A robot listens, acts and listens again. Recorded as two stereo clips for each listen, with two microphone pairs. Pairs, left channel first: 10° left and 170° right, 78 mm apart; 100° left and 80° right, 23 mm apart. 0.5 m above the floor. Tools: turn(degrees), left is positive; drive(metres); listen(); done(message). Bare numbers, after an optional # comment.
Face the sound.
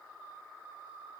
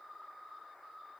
listen()
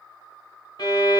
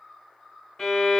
# The violin: 30° left.
turn(30)
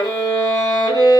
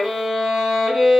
done("Found it: a violin, straight ahead, 1 to 2 m away.")